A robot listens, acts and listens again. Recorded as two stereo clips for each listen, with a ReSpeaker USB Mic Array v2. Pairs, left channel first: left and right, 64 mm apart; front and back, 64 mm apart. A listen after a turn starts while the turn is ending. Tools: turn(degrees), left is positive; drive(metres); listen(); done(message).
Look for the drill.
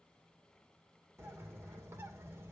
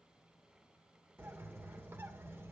listen()
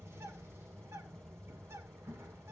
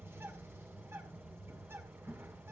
listen()
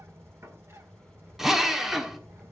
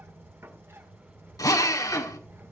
done("Facing the drill.")